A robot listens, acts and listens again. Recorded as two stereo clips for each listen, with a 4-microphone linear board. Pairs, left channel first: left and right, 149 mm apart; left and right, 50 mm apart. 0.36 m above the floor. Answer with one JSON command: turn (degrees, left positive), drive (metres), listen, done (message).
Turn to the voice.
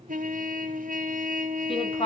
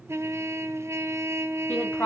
{"turn": 35}
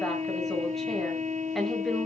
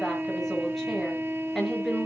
{"done": "Facing the woman speaking, over 4 m away."}